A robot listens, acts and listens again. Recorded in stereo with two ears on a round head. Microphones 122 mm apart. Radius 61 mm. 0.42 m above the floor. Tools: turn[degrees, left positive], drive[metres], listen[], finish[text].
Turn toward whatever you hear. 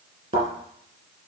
Thought: The thud: about 45° right or 135° right.
Action: turn[-45]
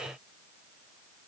Action: listen[]
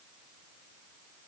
Action: finish[I heard a thud, but can't make it out now. It was about straight ahead or 90° right.]